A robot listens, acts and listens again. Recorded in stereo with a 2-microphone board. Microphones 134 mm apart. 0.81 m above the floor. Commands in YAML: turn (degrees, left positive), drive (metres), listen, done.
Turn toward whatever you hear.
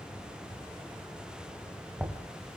turn: -30
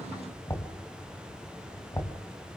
turn: 20
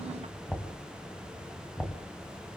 done: "Facing the knocking."